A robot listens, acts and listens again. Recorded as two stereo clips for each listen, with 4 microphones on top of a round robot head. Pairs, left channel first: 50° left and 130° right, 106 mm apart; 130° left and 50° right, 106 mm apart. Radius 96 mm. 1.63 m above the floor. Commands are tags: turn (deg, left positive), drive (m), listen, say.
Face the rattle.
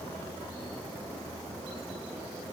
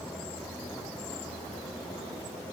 <listen/>
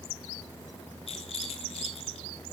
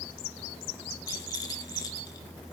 <turn deg="75"/>
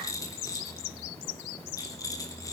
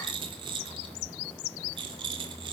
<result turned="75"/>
<say>Facing the rattle, 1 to 2 m away.</say>